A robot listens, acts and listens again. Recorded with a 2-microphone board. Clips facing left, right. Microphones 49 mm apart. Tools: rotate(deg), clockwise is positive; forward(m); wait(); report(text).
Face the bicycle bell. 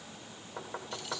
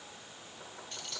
wait()
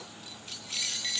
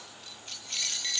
wait()
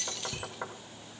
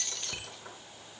rotate(30)
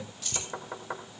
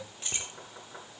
wait()
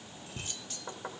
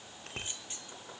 rotate(120)
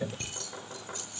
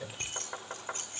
rotate(15)
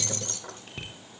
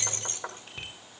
report("Found it: a bicycle bell, straight ahead.")